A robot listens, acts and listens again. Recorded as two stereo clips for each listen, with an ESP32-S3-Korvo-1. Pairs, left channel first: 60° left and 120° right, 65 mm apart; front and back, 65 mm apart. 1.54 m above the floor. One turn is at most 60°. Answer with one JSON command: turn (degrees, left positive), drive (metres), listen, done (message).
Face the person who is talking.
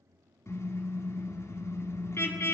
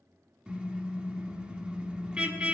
{"listen": true}
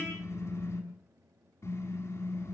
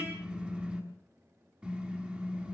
{"listen": true}
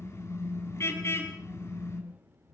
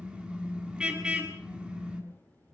{"turn": -60}
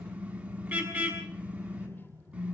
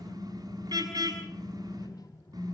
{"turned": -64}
{"done": "Facing the child speaking, 2 to 4 m away."}